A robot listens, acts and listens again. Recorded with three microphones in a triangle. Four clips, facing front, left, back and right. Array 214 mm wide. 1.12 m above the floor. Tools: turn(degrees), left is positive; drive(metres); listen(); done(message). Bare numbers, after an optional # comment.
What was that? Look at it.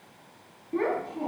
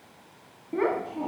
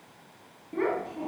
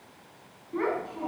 # The child speaking: 85° left.
turn(85)
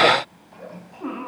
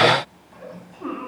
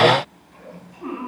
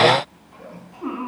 # The child speaking is now 15° left.
turn(15)
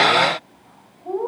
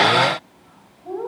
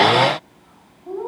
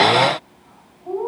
# The child speaking is now 10° left.
turn(10)
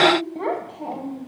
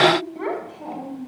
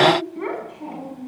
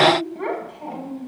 done("Found it: a child speaking, straight ahead.")